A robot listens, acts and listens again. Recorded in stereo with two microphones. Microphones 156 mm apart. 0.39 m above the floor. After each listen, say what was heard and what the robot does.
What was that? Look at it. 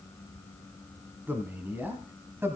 The man speaking: about 15° right or 165° right. Turn 15° right.
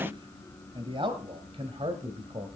So it is at 135° right. Turn 135° right.
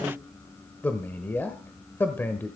The man speaking is now 15° left. Turn 15° left.
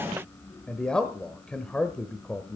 Facing the man speaking, 1 to 2 m away.